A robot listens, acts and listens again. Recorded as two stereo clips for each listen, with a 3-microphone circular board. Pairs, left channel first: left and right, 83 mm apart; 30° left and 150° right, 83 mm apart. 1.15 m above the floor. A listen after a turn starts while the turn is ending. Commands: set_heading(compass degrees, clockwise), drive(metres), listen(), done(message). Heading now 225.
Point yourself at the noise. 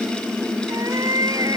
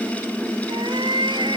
set_heading(0)
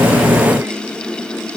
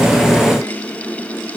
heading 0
listen()
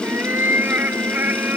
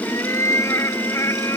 set_heading(25)
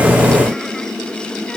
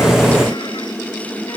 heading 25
listen()
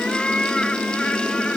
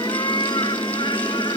set_heading(15)
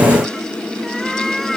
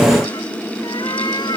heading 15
done("Found it: a cat meowing, straight ahead.")